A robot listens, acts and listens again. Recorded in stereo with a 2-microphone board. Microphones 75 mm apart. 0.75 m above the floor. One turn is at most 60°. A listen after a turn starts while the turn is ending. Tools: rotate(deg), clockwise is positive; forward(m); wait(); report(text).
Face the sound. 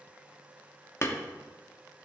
rotate(-40)
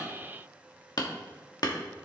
rotate(-60)
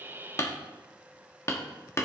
rotate(-50)
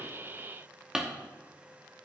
rotate(10)
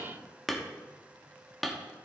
report("Found it: hammering, straight ahead.")